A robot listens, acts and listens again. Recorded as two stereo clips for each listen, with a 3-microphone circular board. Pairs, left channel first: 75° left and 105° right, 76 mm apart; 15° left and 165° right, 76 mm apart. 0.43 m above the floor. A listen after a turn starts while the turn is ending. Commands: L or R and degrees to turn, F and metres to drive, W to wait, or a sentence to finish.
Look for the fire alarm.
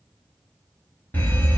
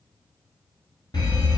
L10
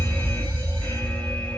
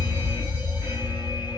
Found it: a fire alarm, straight ahead.